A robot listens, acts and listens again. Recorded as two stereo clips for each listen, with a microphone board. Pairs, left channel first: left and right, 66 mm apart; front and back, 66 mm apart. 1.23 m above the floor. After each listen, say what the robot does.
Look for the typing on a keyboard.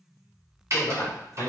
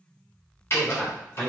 Turn 50° right.
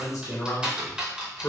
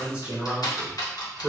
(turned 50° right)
Turn 15° right.
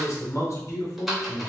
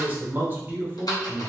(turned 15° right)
Found it: typing on a keyboard, straight ahead, 1 to 2 m away.